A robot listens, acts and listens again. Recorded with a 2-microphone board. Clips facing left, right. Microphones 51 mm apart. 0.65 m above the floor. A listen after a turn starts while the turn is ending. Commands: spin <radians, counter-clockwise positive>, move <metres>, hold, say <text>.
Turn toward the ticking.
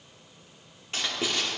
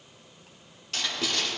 hold
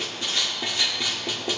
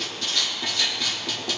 hold
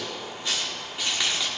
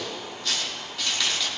say I can't make out ticking, only writing.